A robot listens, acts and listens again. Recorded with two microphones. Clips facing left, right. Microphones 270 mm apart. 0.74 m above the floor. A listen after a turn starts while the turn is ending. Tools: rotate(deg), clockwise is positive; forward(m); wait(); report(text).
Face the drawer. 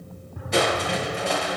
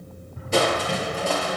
rotate(-70)
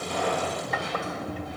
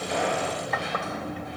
report("Facing the drawer.")